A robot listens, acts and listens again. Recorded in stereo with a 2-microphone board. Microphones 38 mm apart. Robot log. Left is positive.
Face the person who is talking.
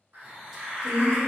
note: The woman speaking: about 40° right or 140° right.
cmd yaw -40
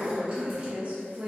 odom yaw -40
note: The woman speaking: about 45° right or 135° right.
cmd yaw -45
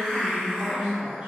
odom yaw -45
note: The woman speaking: about 35° right or 145° right.
cmd yaw -35
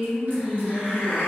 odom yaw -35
note: So it is at 15° right.
cmd yaw -15
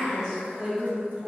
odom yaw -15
note: The woman speaking is now 10° right.
cmd yaw -10
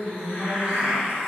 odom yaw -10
end: Facing the woman speaking, 2 to 4 m away.